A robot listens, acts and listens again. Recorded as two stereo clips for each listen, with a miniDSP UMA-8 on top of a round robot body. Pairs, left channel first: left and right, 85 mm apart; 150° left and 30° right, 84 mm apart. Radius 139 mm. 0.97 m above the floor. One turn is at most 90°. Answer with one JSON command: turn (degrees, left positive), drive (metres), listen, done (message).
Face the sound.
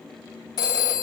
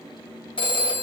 {"turn": 90}
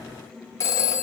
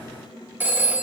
{"turn": 35}
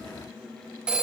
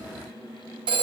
{"turn": -15}
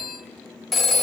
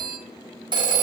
{"done": "Facing the phone ringing."}